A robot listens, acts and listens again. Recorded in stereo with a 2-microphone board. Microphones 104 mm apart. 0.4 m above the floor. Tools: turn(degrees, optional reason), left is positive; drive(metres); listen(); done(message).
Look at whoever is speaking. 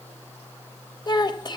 turn(degrees=45, reason="The child speaking: about 45° left or 135° left.")
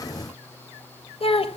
turn(degrees=85, reason="So it is at 85° left.")
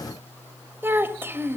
turn(degrees=-20, reason="The child speaking is now 20° right.")
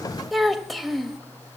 done("Facing the child speaking.")